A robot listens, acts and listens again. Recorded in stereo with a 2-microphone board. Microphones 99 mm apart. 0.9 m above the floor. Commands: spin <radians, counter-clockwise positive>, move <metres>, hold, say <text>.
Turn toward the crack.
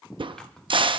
spin -0.96
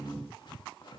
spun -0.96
hold
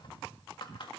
say I heard a crack, but can't make it out now. It was about straight ahead or 70° right.